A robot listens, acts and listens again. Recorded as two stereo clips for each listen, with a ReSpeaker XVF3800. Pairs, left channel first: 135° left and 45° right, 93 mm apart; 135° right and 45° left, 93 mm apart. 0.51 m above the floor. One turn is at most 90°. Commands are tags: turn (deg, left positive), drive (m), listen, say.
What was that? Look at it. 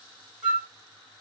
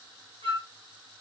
<turn deg="35"/>
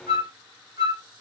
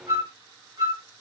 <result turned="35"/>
<say>Found it: a flute, straight ahead, 1 to 2 m away.</say>